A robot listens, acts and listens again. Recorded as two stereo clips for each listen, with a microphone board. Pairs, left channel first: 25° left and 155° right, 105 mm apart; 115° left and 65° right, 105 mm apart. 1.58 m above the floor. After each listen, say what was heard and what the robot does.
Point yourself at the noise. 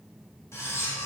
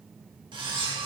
The cutlery clinking: 40° right. Turn 40° right.
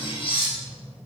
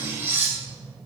Facing the cutlery clinking, 1 to 2 m away.